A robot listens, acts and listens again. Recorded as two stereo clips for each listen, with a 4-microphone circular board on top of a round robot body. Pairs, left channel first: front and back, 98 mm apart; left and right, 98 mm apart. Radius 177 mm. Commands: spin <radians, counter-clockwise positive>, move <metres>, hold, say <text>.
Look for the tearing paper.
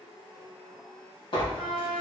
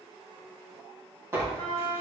spin -0.44
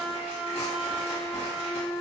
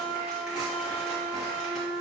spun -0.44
hold
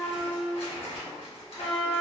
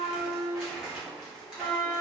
say Found it: tearing paper, straight ahead, 1 to 2 m away.